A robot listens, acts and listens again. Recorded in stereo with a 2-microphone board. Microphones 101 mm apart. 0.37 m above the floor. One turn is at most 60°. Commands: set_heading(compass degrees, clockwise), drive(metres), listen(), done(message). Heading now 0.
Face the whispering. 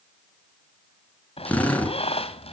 listen()
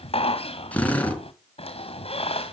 listen()
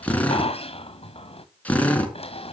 done("I can't make out whispering, only a squeak and a drill.")